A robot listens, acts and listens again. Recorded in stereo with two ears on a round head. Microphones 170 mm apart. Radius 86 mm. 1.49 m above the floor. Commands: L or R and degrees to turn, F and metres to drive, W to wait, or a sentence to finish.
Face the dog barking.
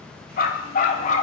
L40
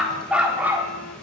R10
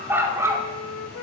R15
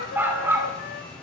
R15
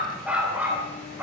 R10
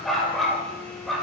Found it: a dog barking, straight ahead, 2 to 4 m away.